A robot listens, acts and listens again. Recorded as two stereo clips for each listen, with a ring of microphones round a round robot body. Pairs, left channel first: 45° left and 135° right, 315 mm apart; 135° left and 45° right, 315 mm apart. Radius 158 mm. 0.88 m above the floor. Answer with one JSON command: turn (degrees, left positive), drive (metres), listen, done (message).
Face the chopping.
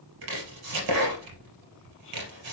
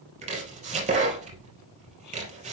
{"turn": -115}
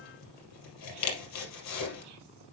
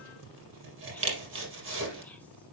{"done": "Found it: chopping, straight ahead."}